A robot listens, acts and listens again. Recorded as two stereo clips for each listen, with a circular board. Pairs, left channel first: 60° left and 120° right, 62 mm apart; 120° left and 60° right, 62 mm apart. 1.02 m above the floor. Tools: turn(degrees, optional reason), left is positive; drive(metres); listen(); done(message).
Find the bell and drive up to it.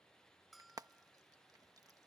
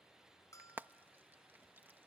turn(degrees=150, reason="The bell: 150° left.")
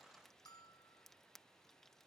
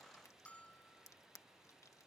turn(degrees=50, reason="The bell is now 50° left.")
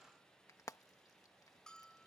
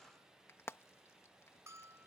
turn(degrees=-20, reason="The bell is now 20° right.")
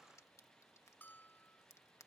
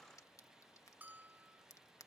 drive(metres=1.0)
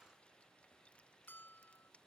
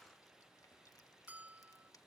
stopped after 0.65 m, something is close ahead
done("Something is in my way. I am facing the bell but have not reached it.")